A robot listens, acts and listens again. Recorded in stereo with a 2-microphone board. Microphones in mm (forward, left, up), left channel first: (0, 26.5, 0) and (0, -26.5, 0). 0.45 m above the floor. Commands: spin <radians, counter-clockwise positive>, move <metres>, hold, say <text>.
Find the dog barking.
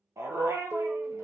spin -1.13
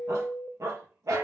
spin -1.22
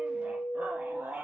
spin -0.52
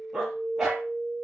say Facing the dog barking.